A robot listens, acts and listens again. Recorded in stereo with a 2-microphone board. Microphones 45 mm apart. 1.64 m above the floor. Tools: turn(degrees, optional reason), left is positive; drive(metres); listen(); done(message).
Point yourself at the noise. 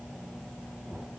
listen()
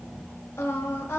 turn(degrees=90)
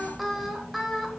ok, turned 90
done("Facing the singing.")